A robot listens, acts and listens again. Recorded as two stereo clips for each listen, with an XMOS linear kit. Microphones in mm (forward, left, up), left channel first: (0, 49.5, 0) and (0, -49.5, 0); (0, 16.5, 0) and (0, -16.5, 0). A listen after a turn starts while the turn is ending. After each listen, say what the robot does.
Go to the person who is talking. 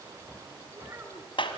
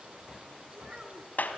Turn 25° right.
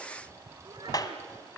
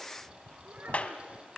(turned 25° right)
Keep listening.
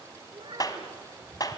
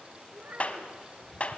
Turn 130° right.
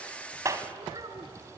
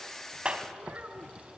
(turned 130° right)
Turn 45° right.
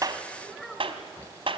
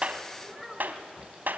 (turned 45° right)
Drive 1.0 m forward.
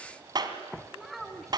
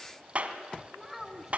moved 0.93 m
Drive 1.0 m forward.
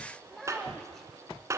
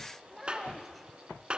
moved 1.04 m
Drive 1.0 m forward.
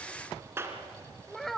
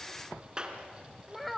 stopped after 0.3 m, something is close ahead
Arrived at the child speaking, straight ahead.